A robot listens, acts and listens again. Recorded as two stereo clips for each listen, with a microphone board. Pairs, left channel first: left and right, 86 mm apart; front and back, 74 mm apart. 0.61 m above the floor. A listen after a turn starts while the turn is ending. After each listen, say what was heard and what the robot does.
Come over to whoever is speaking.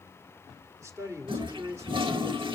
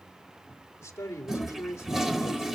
The man speaking: 45° right. Turn 45° right.
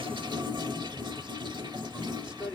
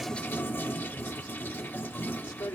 The man speaking is now 15° right. Turn 15° right.
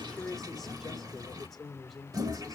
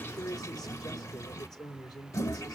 Drive 1.0 m forward.
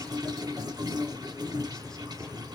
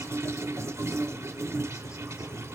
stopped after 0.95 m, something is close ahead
Keep listening.
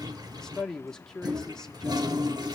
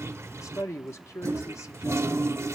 The man speaking is now 10° left. Turn 10° left.
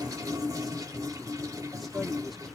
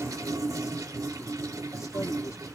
Arrived at the man speaking, straight ahead.